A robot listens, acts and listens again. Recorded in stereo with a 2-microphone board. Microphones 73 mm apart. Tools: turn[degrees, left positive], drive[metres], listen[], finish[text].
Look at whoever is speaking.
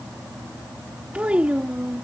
Thought: The child speaking: about 15° right or 165° right.
Action: turn[-15]
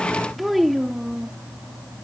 Action: finish[Facing the child speaking.]